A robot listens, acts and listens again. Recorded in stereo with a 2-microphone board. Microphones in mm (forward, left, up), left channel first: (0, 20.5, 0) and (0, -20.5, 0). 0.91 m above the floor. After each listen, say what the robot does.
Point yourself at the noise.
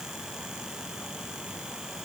Keep listening.
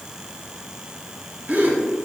Turn 40° right.
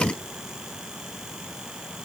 Keep listening.
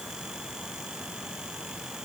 I heard a gasp, but can't make it out now. It was about straight ahead or 100° right.